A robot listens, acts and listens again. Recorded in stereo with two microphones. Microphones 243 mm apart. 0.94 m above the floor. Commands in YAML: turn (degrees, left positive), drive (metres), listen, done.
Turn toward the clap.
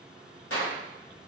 turn: 65
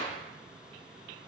listen: true
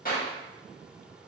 turn: 40
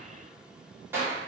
turn: -10
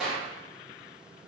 done: "Found it: a clap, straight ahead."